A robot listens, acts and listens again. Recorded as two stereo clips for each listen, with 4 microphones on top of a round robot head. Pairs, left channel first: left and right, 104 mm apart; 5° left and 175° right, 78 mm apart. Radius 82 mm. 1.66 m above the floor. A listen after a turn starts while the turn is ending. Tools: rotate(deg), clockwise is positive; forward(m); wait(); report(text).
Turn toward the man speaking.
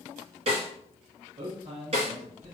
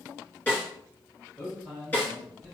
rotate(80)
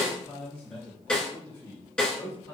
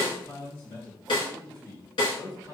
rotate(-35)
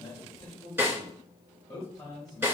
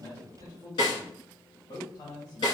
rotate(-25)
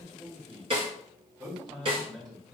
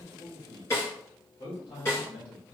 rotate(15)
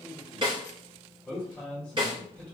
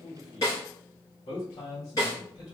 report("Found it: a man speaking, straight ahead.")